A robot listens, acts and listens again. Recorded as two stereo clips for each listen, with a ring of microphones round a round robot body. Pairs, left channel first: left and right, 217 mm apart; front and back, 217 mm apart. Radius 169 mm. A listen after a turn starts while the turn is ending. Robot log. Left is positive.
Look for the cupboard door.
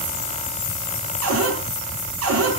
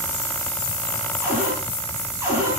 note: The cupboard door: 100° right.
cmd yaw -100
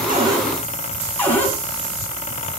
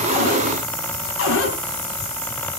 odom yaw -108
note: The cupboard door is now 10° left.
cmd yaw +10
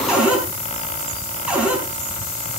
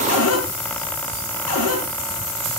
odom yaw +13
end: Found it: a cupboard door, straight ahead, over 4 m away.